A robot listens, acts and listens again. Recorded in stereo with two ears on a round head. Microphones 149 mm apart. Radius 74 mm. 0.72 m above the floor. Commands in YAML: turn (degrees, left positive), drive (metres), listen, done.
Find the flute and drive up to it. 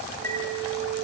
turn: -65
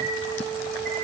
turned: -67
drive: 1.0
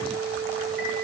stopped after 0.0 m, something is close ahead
done: "Blocked. The flute is further on, straight ahead."